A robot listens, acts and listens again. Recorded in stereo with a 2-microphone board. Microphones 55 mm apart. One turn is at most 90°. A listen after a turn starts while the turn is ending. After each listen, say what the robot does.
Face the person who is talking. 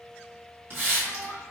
Turn 90° left.
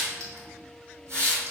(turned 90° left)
Keep listening.
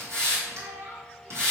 Turn 35° right.
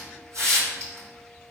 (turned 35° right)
Keep listening.
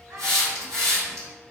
Turn 50° right.
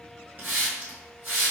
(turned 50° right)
Keep listening.
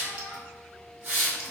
Turn 10° left.
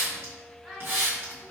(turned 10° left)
Found it: a child speaking, straight ahead, 1 to 2 m away.